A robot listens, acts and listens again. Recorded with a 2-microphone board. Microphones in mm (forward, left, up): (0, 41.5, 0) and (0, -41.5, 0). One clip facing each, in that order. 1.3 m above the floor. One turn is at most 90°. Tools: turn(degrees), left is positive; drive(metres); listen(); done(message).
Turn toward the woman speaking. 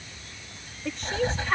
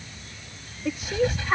turn(degrees=-30)
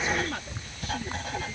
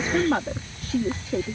turn(degrees=-90)
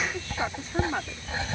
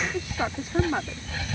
turn(degrees=-10)
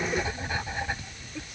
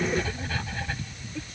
listen()
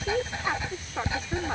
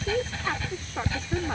done("Found it: a woman speaking, straight ahead.")